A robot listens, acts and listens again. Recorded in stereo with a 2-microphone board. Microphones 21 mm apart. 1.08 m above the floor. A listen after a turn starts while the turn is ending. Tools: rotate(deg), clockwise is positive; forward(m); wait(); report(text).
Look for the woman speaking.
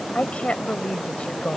rotate(-70)
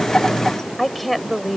report("Found it: a woman speaking, straight ahead.")